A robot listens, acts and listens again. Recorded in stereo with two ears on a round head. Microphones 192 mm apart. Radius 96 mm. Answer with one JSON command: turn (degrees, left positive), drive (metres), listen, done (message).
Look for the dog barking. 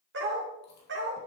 {"turn": -60}
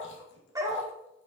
{"turn": -20}
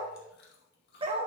{"turn": -30}
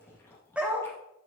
{"turn": -10}
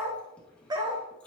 {"turn": -20}
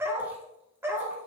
{"turn": -10}
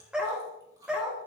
{"done": "Found it: a dog barking, straight ahead."}